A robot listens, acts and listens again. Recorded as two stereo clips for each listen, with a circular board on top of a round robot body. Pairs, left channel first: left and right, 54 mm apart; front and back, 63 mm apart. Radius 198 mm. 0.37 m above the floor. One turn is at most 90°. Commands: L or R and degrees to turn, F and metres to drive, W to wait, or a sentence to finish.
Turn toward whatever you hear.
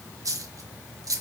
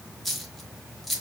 R90
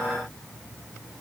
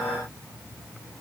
Facing where the dropped coin came from. I can't hear it now.